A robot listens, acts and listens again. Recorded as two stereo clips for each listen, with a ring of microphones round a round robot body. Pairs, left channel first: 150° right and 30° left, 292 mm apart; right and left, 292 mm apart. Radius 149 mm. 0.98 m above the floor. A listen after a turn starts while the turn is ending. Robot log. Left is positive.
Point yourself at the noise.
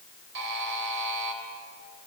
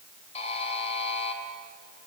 note: The buzzer: 20° right.
cmd yaw -20
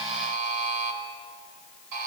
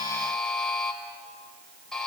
end: Found it: a buzzer, straight ahead, 2 to 4 m away.